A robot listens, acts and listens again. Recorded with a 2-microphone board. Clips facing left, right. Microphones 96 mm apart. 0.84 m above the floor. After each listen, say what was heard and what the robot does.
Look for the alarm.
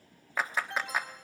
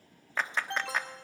Turn 90° right.
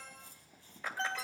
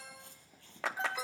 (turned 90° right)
So it is at 10° right. Turn 10° right.
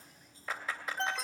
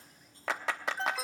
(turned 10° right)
Facing the alarm.